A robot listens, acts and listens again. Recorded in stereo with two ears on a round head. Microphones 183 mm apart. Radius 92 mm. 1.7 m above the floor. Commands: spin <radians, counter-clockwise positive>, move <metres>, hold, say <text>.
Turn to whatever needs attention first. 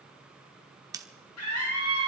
spin 1.57
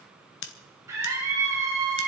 spin -0.26
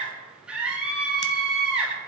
say Facing the scream.